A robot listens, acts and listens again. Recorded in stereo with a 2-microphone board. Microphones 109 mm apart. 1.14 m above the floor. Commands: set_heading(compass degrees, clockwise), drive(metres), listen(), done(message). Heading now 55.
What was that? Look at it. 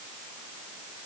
listen()
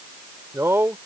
set_heading(75)
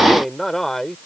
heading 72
done("Found it: a man speaking, straight ahead.")